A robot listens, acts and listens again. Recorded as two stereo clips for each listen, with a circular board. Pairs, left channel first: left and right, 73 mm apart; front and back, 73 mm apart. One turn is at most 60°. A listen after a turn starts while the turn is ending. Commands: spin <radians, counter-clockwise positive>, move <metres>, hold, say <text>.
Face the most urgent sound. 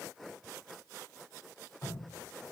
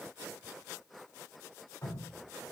hold
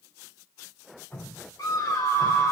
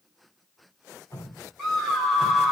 spin 1.05
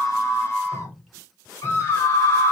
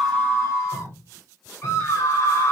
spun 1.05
spin 0.79
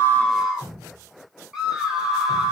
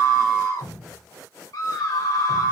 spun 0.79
spin -0.17
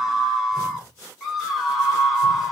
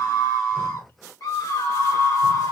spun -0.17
say Facing the scream, 1 to 2 m away.